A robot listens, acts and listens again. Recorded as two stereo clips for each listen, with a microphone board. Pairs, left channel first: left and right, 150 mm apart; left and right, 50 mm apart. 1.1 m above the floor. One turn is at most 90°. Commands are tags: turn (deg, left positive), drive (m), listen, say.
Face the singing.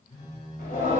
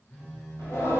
<turn deg="70"/>
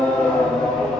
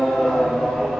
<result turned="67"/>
<say>Found it: singing, straight ahead, 1 to 2 m away.</say>